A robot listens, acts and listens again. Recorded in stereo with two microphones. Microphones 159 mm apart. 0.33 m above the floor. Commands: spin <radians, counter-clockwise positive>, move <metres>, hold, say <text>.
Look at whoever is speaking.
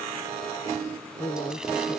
spin 0.61
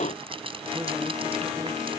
hold
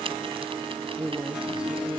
say Found it: a woman speaking, straight ahead.